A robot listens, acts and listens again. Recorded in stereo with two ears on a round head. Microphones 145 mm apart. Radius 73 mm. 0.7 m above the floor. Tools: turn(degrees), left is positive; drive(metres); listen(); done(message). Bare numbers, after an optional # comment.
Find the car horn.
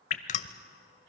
listen()
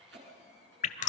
listen()
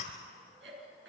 done("I can't make out a car horn to turn to.")